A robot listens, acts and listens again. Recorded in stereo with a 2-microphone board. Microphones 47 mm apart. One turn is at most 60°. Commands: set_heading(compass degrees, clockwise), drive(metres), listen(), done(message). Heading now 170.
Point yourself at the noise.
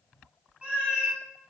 set_heading(200)
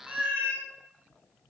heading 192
set_heading(252)
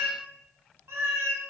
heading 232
set_heading(292)
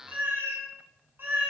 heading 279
set_heading(324)
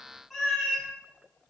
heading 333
done("Facing the cat meowing, under 1 m away.")